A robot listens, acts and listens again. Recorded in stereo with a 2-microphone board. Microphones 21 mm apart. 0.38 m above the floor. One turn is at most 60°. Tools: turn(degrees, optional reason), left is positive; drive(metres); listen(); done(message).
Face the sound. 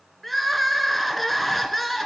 turn(degrees=30)
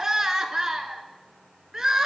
turn(degrees=-30, reason="So it is at 30° right.")
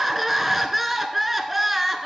turn(degrees=-10, reason="The crying is now 10° right.")
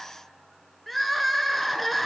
done("Facing the crying, under 1 m away.")